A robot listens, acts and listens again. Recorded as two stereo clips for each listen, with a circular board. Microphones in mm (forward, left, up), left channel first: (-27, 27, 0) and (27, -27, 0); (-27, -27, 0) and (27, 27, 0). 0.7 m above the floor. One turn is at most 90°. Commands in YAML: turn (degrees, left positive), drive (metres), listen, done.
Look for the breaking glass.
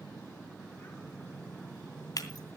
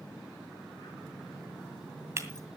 turn: 90
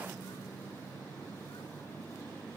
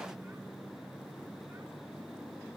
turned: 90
turn: 10
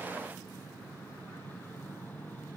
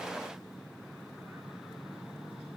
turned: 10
done: "Facing where the breaking glass came from. I can't hear it now."